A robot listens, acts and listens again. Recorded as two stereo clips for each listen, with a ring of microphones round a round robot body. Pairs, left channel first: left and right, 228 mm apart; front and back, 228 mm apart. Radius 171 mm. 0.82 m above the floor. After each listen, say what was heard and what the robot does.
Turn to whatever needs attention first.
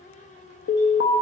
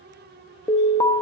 The alarm: 75° left. Turn 75° left.
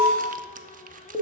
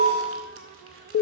Found it: an alarm, straight ahead, 1 to 2 m away.